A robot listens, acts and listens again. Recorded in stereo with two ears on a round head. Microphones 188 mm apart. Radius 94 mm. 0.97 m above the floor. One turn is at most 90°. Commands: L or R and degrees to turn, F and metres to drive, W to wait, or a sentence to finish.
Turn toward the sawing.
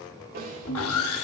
L90
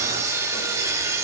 R15
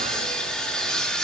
Facing the sawing.